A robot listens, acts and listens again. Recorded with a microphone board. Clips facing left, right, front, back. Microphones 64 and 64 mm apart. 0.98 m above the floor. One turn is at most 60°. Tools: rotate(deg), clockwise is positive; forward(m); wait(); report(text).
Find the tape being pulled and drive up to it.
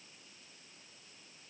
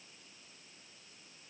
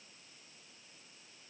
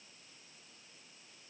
wait()
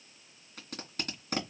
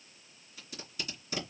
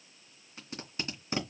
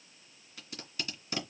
rotate(-60)
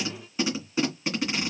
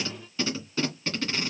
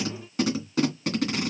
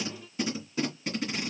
rotate(-15)
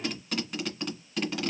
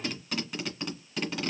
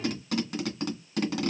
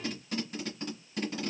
forward(1.0)
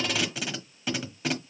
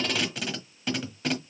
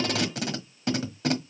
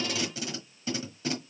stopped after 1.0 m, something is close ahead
report("I am next to the tape being pulled.")